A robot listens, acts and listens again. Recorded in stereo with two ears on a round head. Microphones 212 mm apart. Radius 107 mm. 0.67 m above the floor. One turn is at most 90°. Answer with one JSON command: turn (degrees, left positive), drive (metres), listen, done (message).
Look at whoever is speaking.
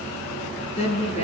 {"turn": 25}
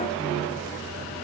{"listen": true}
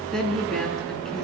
{"done": "Facing the woman speaking."}